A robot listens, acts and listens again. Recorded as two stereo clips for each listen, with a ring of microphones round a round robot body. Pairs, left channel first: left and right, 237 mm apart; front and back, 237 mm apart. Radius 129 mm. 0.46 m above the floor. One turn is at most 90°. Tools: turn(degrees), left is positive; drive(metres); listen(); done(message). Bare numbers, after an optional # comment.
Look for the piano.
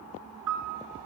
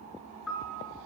# The piano: 85° right.
turn(-85)
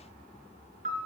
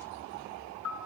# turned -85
# The piano is now 30° right.
turn(-30)
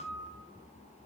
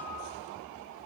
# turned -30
listen()
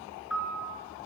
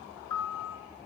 done("Found it: a piano, straight ahead.")